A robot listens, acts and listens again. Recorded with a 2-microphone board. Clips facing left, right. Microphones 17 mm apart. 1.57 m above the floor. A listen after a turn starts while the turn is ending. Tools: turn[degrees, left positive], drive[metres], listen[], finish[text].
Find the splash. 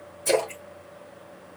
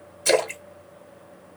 Thought: The splash: about 60° right or 120° right.
Action: turn[-60]
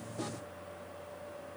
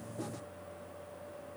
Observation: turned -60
Action: listen[]
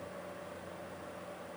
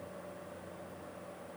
Action: finish[I heard a splash, but can't make it out now. It was about straight ahead or 60° right.]